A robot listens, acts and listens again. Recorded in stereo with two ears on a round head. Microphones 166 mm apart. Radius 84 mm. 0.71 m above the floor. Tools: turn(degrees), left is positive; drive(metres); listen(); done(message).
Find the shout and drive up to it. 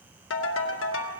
listen()
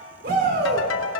turn(degrees=-50)
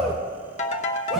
drive(metres=1.0)
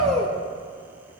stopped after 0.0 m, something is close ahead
done("Blocked. The shout is further on, straight ahead.")